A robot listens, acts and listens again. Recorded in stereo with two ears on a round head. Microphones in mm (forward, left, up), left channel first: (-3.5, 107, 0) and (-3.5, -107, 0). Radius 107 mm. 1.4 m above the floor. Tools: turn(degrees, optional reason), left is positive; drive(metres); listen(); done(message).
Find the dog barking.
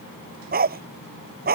turn(degrees=-40, reason="The dog barking: about 40° right or 140° right.")
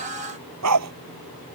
turn(degrees=-100, reason="So it is at 100° right.")
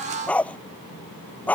done("Found it: a dog barking, straight ahead.")